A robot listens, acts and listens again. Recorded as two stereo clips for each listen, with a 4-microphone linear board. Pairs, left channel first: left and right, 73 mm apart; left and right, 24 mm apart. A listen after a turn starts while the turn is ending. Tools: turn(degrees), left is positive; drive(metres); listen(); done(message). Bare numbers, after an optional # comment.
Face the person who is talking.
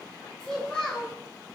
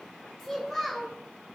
turn(30)
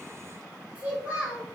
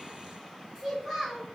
# So it is at 20° right.
turn(-20)
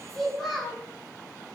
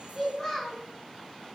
done("Facing the child speaking.")